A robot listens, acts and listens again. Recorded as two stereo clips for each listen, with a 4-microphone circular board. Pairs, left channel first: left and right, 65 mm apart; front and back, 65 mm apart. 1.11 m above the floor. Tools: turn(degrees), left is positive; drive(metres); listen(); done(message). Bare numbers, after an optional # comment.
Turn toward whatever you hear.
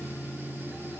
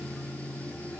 listen()
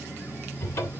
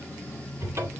# The cupboard door: 130° left.
turn(130)
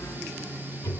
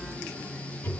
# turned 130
# The cupboard door is now 55° left.
turn(55)
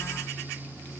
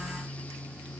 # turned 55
listen()
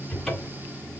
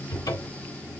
done("Facing the cupboard door.")